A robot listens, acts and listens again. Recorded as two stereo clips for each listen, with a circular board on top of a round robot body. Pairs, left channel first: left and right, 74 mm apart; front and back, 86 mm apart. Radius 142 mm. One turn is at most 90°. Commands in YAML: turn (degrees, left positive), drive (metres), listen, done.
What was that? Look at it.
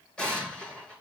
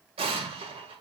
turn: 90
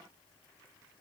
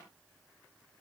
turn: 80
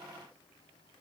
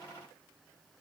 done: "Facing where the explosion came from. I can't hear it now."